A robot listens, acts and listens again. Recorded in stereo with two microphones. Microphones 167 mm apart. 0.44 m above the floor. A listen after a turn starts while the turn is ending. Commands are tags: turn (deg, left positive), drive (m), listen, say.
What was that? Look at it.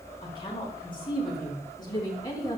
<turn deg="20"/>
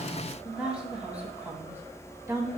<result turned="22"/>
<turn deg="-20"/>
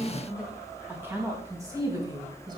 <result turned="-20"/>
<turn deg="-25"/>
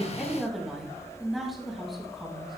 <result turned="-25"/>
<say>Found it: a woman speaking, straight ahead, 2 to 4 m away.</say>